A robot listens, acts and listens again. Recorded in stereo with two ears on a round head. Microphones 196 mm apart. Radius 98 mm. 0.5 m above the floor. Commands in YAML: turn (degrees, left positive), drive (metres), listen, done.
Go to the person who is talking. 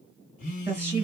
turn: -30
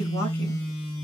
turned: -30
listen: true
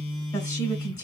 turn: 20
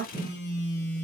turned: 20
drive: 1.0
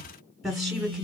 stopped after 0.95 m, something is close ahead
done: "I am next to the woman speaking."